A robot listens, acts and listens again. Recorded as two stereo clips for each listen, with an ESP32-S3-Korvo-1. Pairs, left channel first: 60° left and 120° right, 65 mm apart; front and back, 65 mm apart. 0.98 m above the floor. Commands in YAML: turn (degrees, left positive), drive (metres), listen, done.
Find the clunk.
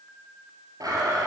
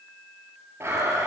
listen: true
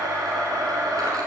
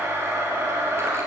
listen: true
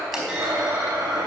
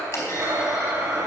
turn: -40
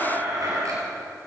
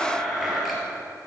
done: "I heard a clunk from this way, but can't make it out now."